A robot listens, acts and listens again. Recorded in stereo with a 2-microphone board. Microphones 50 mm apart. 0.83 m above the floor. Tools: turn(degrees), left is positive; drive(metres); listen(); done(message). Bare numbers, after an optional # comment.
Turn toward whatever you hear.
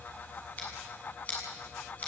# The scissors: about 35° left or 145° left.
turn(35)
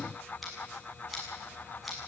done("Facing the scissors.")